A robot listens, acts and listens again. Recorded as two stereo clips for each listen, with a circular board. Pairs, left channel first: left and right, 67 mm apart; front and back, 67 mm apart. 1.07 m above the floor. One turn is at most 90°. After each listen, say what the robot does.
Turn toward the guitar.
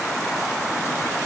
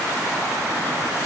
Keep listening.
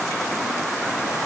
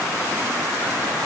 Keep listening.
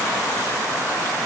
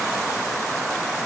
I can't make out a guitar.